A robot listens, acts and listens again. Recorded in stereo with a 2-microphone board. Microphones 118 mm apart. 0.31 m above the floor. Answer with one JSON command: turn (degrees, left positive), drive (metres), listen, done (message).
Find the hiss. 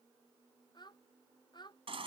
{"listen": true}
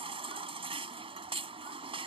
{"listen": true}
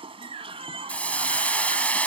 {"turn": 30}
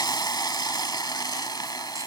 {"turn": 140}
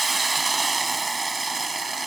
{"done": "Facing the hiss."}